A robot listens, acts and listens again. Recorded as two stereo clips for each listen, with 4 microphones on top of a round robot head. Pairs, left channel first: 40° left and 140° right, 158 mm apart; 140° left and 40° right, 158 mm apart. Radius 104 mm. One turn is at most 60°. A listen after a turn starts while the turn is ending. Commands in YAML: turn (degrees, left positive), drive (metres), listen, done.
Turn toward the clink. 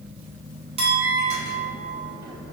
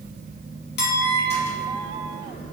turn: 60
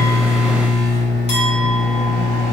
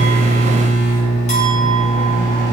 turn: 60
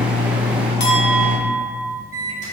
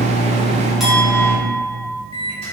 turn: 50
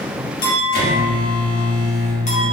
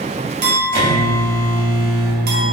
turn: -10
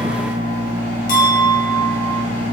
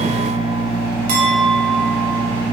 done: "Found it: a clink, straight ahead."